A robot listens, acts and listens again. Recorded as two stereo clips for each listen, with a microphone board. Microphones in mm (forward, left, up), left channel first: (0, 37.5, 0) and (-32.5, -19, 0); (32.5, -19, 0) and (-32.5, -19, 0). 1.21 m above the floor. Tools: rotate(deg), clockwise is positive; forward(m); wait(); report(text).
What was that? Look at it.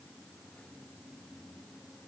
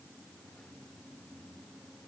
wait()
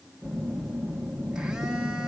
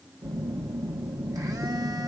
rotate(-160)
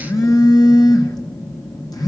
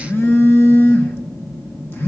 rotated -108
rotate(-55)
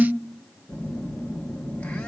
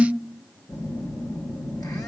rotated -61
rotate(10)
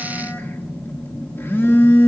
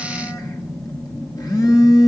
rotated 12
report("Found it: a phone buzzing, straight ahead, 1 to 2 m away.")